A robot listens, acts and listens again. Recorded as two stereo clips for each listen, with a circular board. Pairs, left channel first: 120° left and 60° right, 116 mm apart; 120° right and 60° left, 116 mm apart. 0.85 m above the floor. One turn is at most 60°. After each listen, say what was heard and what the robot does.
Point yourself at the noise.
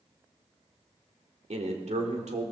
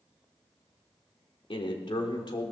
The man speaking: 70° right. Turn 60° right.
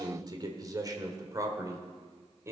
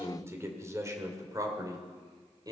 Found it: a man speaking, straight ahead, 2 to 4 m away.